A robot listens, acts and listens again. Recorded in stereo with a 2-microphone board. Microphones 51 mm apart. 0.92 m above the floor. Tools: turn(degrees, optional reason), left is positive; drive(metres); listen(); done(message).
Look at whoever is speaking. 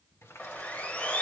listen()
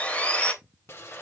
listen()
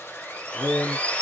turn(degrees=75, reason="The man speaking: about 75° left or 105° left.")
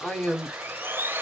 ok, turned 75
turn(degrees=25, reason="So it is at 25° left.")
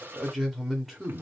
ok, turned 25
done("Found it: a man speaking, straight ahead.")